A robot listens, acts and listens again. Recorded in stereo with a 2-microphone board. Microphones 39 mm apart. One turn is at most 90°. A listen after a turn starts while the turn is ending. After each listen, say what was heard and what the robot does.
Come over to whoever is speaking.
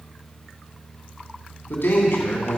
The man speaking: about 70° left or 110° left. Turn 70° left.
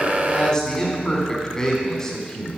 So it is at 20° left. Turn 20° left.
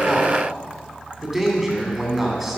Drive 1.0 m forward.
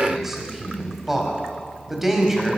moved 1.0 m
Drive 1.0 m forward.
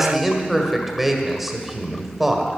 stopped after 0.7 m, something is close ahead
I am next to the man speaking.